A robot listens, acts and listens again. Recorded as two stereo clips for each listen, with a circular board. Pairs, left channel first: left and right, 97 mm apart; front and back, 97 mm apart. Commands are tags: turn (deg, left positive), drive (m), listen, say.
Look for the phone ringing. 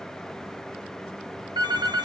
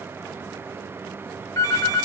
<turn deg="-50"/>
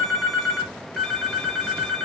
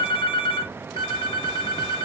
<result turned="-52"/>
<say>Found it: a phone ringing, straight ahead.</say>